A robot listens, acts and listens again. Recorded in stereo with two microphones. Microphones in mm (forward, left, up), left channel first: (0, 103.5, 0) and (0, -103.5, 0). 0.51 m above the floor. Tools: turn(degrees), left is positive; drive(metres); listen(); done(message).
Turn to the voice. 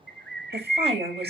turn(degrees=-30)
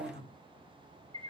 turn(degrees=-120)
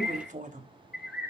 turn(degrees=-40)
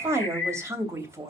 turn(degrees=-15)
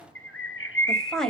done("Facing the woman speaking.")